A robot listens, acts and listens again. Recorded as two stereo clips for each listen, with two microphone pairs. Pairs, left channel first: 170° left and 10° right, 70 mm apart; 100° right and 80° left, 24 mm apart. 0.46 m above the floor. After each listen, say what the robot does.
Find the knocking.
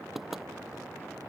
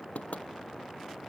Turn 100° right.
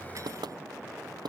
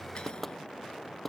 Turn 20° right.
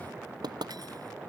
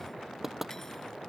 Facing the knocking.